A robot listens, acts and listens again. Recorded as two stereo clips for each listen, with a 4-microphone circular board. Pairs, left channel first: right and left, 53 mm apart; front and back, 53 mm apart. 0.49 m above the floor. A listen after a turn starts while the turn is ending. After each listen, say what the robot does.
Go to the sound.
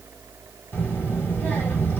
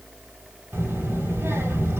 Turn 135° right.
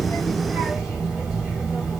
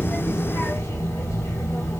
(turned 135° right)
Turn 10° left.
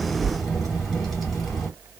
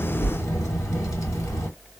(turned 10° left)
Drive 1.0 m forward.
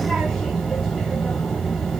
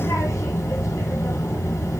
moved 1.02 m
Drive 1.0 m forward.
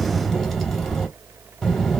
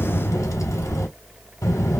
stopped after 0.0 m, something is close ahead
Arrived at the child speaking, straight ahead.